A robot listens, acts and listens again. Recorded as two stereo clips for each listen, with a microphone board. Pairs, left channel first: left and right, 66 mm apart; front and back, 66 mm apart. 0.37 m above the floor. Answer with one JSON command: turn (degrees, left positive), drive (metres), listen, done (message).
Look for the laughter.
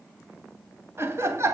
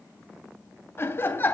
{"turn": -55}
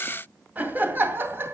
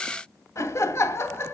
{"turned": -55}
{"turn": -40}
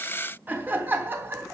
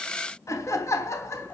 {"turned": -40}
{"turn": -40}
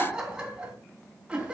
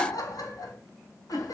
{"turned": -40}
{"turn": -15}
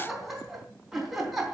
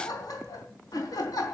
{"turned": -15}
{"done": "Found it: laughter, straight ahead, 2 to 4 m away."}